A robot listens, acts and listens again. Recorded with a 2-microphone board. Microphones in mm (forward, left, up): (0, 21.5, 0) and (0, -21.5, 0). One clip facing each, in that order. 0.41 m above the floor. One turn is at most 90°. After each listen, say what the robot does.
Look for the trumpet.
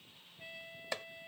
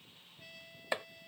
Turn 20° left.
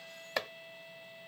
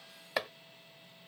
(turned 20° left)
Turn 90° left.
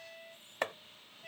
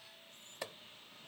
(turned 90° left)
Turn 70° left.
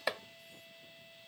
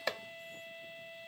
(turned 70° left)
Turn 40° right.
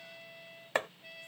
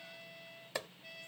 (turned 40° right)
Turn 10° left.
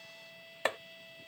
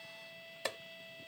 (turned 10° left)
Facing the trumpet.